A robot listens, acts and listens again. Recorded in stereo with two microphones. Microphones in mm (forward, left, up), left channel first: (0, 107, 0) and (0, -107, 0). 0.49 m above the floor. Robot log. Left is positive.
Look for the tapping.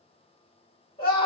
cmd idle
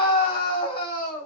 cmd idle
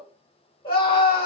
end: I can't make out tapping to turn to.